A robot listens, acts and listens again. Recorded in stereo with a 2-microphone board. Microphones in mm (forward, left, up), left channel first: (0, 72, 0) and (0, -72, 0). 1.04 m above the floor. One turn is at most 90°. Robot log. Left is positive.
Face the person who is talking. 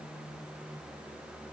cmd idle
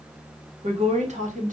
note: The woman speaking: about 65° right or 115° right.
cmd yaw -65
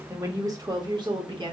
note: So it is at 35° right.
cmd yaw -35
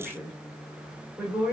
note: The woman speaking is now 15° right.
cmd yaw -15
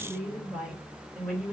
end: Facing the woman speaking.